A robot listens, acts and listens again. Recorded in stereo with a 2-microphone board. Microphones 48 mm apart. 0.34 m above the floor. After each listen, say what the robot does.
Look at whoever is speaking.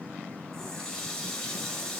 Keep listening.
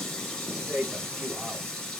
Turn 25° right.
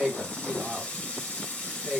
Facing the man speaking, 1 to 2 m away.